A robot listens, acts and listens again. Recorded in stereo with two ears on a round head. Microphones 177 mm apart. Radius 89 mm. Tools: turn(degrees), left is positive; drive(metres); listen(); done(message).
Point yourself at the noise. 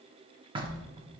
turn(degrees=-25)
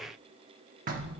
turn(degrees=-125)
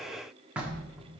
turn(degrees=-10)
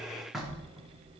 done("Found it: knocking, straight ahead, 1 to 2 m away.")